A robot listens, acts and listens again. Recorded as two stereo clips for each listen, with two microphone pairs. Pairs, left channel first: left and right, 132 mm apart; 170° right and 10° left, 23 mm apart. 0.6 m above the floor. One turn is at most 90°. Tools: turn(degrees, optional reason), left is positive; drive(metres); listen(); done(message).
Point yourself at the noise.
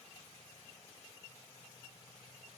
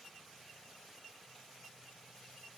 listen()
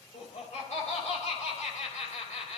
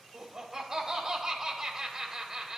turn(degrees=70, reason="The laughter: 70° left.")
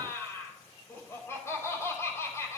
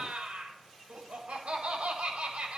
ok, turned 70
turn(degrees=25, reason="The laughter is now 25° left.")
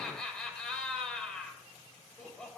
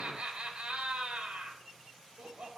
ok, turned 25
done("Found it: laughter, straight ahead, 2 to 4 m away.")